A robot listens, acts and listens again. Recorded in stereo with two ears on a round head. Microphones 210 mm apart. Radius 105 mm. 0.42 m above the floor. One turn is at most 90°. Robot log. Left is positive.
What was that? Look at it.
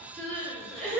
note: The crying: about 30° right or 150° right.
cmd yaw -30
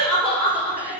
end: Facing the crying, 1 to 2 m away.